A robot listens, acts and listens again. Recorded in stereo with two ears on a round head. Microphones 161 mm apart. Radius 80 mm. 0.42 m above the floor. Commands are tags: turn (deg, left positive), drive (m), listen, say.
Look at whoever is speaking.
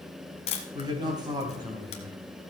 <turn deg="-25"/>
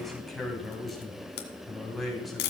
<say>Found it: a man speaking, straight ahead, 2 to 4 m away.</say>